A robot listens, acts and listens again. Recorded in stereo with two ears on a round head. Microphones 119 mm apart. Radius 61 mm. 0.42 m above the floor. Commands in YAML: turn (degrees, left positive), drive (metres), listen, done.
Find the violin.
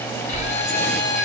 turn: 60
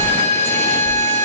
turn: 55
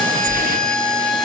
done: "Facing the violin."